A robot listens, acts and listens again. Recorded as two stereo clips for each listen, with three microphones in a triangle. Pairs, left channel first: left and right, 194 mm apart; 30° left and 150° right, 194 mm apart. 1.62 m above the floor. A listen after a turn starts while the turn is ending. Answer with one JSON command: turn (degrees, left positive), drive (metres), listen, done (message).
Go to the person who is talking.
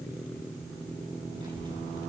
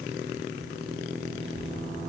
{"turn": -155}
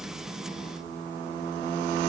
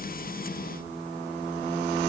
{"listen": true}
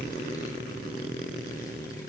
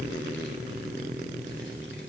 {"turn": 20}
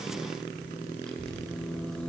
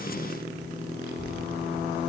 {"drive": 1.0}
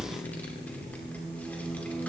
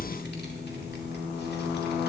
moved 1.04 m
{"turn": 10}
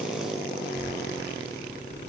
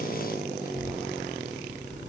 {"drive": 1.0}
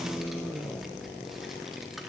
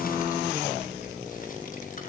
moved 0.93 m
{"drive": 1.0}
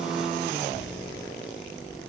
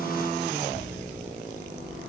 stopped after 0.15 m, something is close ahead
{"done": "I am next to the child speaking."}